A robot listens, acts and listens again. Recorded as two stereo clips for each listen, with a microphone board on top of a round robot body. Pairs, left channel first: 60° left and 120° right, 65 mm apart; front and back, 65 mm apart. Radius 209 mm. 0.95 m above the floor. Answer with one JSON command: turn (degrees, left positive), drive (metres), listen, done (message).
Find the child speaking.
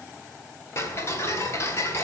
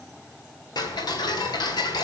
{"listen": true}
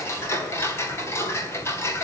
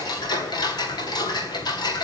{"listen": true}
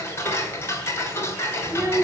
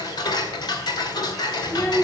{"turn": -60}
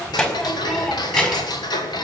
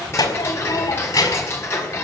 {"turn": -15}
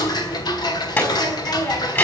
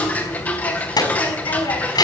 {"done": "Facing the child speaking, over 4 m away."}